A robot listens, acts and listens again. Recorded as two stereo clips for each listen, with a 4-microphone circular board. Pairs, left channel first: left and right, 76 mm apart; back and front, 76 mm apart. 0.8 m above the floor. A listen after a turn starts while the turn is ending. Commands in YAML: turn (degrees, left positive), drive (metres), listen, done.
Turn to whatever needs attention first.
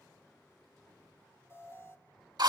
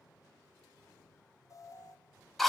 turn: 140
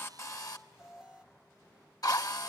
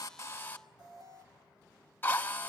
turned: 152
turn: -10
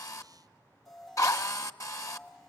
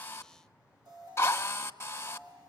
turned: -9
done: "Facing the alarm."